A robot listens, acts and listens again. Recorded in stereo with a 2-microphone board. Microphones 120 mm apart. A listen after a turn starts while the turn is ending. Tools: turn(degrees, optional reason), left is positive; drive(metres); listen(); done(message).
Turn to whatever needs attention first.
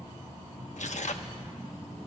listen()
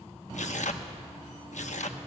listen()
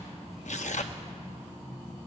done("I can't make out anything urgent, only tearing paper.")